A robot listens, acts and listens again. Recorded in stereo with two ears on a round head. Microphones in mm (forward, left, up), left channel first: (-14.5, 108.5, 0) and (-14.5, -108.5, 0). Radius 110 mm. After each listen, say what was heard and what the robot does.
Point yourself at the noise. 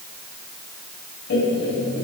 The laughter: about 45° left or 135° left. Turn 45° left.
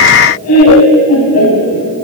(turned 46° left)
So it is at 105° left. Turn 105° left.
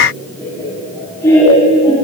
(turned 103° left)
The laughter is now 10° left. Turn 10° left.
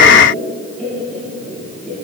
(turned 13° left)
Found it: laughter, straight ahead, over 4 m away.